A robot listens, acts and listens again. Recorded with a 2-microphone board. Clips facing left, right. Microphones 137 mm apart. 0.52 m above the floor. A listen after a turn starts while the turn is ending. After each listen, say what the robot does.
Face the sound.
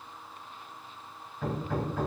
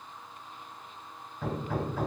Turn 30° right.
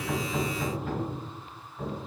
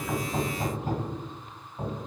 Turn 145° right.
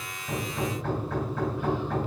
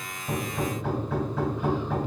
Facing the hammering, 2 to 4 m away.